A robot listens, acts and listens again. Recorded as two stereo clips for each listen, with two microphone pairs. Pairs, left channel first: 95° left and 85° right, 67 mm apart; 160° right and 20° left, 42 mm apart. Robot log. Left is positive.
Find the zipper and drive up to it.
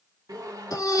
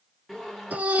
note: The zipper: 70° right.
cmd yaw -70
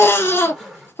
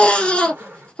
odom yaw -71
cmd fwd 1.0
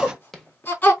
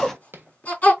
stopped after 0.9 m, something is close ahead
end: Arrived at the zipper, straight ahead.